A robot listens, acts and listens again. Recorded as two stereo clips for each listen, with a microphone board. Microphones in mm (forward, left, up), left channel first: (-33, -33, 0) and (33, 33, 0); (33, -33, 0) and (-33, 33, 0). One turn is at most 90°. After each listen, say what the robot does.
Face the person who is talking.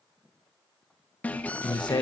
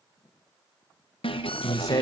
Turn 90° right.
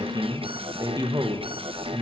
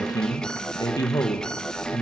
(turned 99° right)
Facing the man speaking.